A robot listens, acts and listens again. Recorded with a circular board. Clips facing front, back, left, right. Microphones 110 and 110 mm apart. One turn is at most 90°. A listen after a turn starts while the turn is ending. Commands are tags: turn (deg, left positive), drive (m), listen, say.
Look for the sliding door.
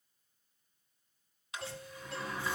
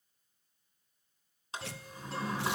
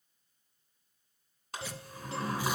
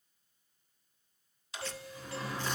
<turn deg="90"/>
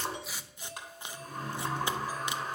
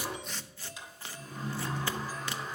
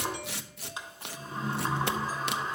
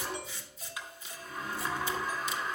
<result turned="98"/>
<turn deg="25"/>
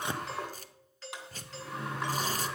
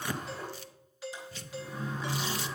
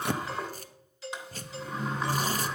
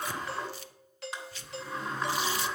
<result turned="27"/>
<say>Found it: a sliding door, straight ahead, 2 to 4 m away.</say>